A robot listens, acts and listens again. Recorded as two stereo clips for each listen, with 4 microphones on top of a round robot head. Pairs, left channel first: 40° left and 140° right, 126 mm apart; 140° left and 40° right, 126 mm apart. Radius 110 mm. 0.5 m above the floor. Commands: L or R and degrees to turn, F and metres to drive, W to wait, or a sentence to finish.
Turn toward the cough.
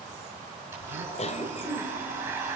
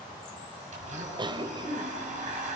L10
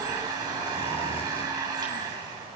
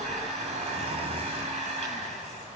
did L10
W
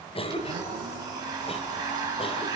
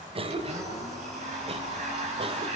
Facing the cough, 2 to 4 m away.